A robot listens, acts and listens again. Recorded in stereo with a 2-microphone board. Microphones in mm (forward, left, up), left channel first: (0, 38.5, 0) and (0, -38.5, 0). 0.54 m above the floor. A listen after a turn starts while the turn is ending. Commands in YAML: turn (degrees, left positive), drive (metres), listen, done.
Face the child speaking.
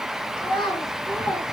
turn: 90
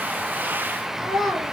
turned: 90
done: "Facing the child speaking."